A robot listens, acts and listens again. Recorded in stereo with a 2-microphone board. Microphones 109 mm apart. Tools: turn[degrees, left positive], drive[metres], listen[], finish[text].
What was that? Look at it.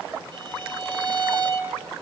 Thought: The violin: about 55° right or 125° right.
Action: turn[-55]
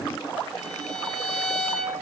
Action: finish[Found it: a violin, straight ahead.]